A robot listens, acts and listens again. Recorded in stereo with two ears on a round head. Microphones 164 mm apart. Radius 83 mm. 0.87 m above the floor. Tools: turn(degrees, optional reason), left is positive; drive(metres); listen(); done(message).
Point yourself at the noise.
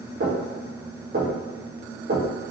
turn(degrees=-50, reason="The knocking: about 50° right or 130° right.")
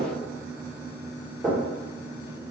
done("Facing the knocking.")